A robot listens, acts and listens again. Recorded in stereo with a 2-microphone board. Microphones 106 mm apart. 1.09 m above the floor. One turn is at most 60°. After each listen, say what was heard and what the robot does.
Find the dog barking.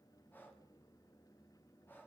Keep listening.
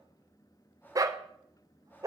The dog barking: about 35° right or 145° right. Turn 35° right.
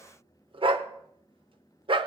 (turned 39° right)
So it is at 105° right. Turn 60° right.
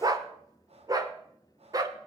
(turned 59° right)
The dog barking is now 45° right. Turn 45° right.
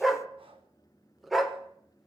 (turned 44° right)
Found it: a dog barking, straight ahead.